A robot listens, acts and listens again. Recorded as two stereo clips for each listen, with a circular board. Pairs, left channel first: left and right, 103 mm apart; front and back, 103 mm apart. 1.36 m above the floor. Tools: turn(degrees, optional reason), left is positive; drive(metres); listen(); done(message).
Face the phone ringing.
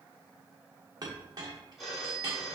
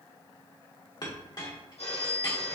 done("Found it: a phone ringing, straight ahead.")